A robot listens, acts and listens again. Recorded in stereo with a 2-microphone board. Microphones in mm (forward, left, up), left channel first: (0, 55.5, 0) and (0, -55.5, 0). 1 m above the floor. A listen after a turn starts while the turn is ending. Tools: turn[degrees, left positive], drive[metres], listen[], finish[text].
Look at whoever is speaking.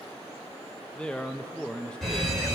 Action: turn[30]
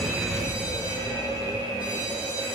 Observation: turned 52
Action: listen[]
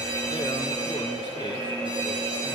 Action: listen[]
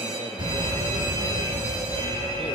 Action: finish[I heard a man speaking, but can't make it out now. It was about 40° right or 120° left.]